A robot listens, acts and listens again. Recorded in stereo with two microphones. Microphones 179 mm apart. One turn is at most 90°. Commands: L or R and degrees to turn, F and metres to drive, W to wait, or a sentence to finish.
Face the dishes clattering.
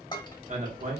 L25
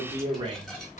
W
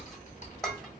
Found it: dishes clattering, straight ahead.